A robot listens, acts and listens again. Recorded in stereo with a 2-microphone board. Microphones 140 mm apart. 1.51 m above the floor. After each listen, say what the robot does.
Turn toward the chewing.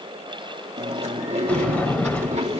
Turn 55° right.
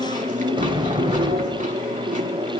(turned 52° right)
Turn 70° right.
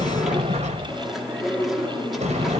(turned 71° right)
Found it: chewing, straight ahead.